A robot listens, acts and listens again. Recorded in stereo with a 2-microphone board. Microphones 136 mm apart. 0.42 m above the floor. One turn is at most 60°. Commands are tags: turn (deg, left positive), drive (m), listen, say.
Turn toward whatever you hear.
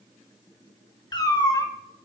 <turn deg="30"/>
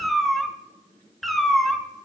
<say>Found it: a cat meowing, straight ahead.</say>